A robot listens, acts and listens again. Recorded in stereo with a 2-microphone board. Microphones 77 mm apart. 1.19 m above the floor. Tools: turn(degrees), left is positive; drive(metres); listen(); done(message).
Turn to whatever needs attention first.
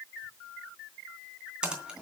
listen()
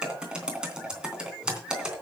listen()
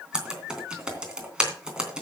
done("I can't make out anything urgent, only typing on a keyboard.")